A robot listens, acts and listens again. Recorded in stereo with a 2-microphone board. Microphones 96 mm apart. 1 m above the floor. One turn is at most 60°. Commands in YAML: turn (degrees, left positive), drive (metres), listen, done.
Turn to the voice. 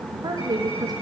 turn: -45
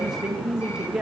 turn: -10
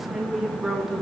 done: "Facing the woman speaking, 1 to 2 m away."